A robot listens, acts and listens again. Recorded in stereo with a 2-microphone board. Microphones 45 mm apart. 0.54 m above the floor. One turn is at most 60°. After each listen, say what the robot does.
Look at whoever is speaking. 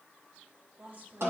Turn 50° right.
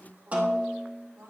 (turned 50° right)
Turn 60° right.
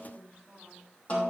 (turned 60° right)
Turn 10° right.
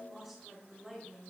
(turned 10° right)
Found it: a woman speaking, straight ahead.